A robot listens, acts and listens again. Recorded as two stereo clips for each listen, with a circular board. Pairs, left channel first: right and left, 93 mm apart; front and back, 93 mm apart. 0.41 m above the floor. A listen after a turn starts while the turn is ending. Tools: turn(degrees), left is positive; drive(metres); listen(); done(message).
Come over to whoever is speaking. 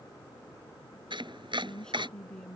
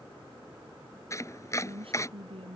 turn(degrees=-170)
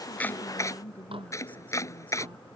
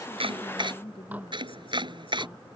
turn(degrees=-15)
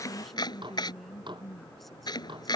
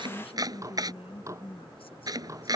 drive(metres=1.0)
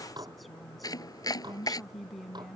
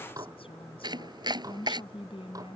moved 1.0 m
drive(metres=1.0)
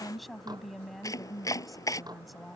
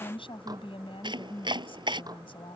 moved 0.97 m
drive(metres=1.0)
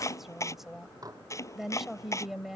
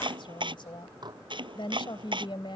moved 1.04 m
drive(metres=1.0)
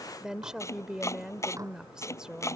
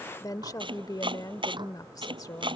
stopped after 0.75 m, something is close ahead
turn(degrees=10)
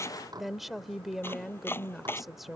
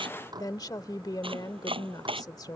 done("I am next to the woman speaking.")